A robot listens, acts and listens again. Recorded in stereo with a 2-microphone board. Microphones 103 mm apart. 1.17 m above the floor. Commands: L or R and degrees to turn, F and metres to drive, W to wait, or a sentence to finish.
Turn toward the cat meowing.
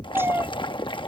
R20
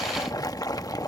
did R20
W
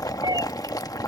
R40
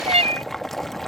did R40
R110
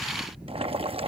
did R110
W
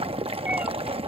W
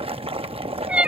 R10
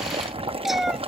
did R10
Facing the cat meowing.